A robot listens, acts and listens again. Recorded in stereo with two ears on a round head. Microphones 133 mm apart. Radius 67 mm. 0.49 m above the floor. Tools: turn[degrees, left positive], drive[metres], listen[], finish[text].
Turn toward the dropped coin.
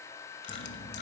Action: turn[90]
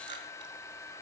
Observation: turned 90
Action: finish[Facing where the dropped coin came from. I can't hear it now.]